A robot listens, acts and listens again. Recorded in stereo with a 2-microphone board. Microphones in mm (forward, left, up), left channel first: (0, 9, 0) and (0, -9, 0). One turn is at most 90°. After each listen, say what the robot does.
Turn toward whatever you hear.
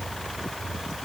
Keep listening.
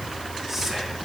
Turn 25° right.
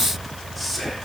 Found it: whispering, straight ahead, 2 to 4 m away.